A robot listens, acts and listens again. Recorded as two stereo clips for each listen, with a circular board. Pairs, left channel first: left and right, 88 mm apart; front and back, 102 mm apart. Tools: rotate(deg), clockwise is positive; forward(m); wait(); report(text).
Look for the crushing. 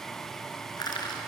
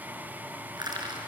rotate(-130)
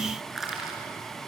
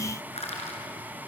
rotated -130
report("Facing the crushing, over 4 m away.")